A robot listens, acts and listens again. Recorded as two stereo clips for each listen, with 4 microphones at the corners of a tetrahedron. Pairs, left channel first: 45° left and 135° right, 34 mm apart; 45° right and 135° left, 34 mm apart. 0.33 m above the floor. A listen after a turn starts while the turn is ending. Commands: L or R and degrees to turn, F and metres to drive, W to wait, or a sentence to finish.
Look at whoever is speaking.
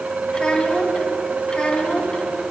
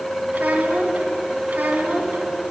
L105
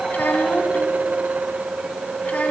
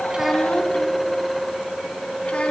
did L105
W
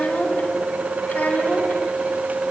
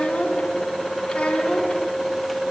Found it: a child speaking, straight ahead.